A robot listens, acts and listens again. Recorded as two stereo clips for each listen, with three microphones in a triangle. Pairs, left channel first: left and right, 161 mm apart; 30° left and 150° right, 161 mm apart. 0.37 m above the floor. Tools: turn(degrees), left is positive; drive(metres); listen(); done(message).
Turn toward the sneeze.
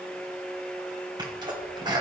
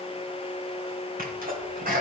turn(degrees=-150)
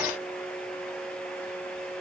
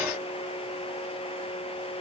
done("I heard a sneeze from this way, but can't make it out now.")